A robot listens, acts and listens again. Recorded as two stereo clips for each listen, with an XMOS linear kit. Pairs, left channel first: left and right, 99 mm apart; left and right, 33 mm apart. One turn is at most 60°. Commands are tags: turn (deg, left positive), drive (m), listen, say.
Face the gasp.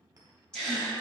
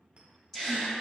<turn deg="30"/>
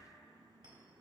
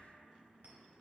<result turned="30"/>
<listen/>
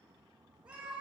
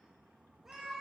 <say>I heard a gasp, but can't make it out now. It was about 20° right or 140° left.</say>